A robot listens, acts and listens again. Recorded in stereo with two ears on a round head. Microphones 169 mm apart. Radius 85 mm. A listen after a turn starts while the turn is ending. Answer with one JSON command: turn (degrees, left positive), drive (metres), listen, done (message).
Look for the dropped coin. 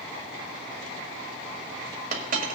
{"turn": -40}
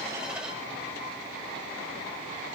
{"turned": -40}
{"listen": true}
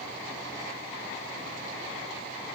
{"done": "I heard a dropped coin, but can't make it out now. It was about straight ahead or 100° right."}